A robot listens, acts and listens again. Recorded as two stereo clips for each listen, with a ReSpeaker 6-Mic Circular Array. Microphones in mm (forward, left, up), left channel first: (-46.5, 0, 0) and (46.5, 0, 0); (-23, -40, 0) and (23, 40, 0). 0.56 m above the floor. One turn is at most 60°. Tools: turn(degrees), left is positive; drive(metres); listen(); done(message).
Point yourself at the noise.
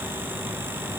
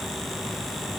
listen()
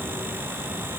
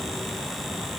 listen()
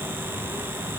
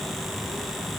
done("I can't make out anything to turn to.")